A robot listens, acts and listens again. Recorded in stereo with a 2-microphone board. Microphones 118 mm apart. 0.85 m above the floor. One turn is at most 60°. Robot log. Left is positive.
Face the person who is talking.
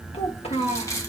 note: The child speaking: about 55° left or 125° left.
cmd yaw +55
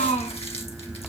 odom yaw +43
note: So it is at 85° left.
cmd yaw +60
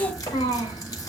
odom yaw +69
note: The child speaking is now 35° left.
cmd yaw +35
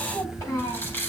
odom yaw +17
note: The child speaking is now 20° left.
cmd yaw +20
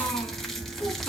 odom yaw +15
cmd idle
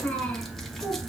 end: Facing the child speaking, 2 to 4 m away.